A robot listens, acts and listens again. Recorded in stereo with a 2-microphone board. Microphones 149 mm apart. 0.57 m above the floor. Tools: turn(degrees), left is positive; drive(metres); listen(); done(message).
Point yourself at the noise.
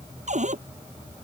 turn(degrees=-60)
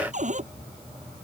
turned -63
turn(degrees=-60)
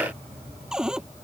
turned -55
done("Facing the cupboard door.")